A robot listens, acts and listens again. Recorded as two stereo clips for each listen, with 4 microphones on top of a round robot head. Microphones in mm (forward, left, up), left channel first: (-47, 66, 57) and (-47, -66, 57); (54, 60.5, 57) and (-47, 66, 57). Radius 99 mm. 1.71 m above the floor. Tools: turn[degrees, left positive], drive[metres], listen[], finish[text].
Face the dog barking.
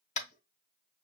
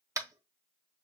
Action: listen[]
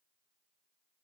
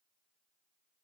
Action: listen[]
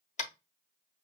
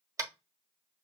Action: finish[I can't make out a dog barking to turn to.]